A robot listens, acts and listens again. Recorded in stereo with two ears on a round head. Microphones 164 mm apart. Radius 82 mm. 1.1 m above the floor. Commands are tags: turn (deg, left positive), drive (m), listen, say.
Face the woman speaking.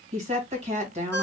<turn deg="-35"/>
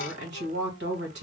<turn deg="-110"/>
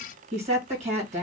<turn deg="-40"/>
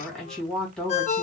<say>Facing the woman speaking, 1 to 2 m away.</say>